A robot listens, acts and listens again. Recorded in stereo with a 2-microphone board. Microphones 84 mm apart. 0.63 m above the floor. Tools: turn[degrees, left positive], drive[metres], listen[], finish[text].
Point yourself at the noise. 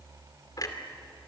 Thought: The clunk: about 45° left or 135° left.
Action: turn[45]
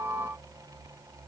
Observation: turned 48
Action: listen[]
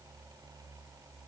Action: finish[I heard a clunk, but can't make it out now. It was about straight ahead or 85° left.]